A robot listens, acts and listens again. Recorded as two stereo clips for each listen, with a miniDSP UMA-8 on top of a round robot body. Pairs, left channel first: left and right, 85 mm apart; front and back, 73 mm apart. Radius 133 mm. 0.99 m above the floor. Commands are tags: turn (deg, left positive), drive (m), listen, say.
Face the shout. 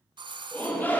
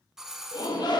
<turn deg="20"/>
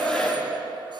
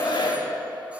<turn deg="10"/>
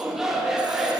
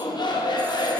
<say>Found it: a shout, straight ahead.</say>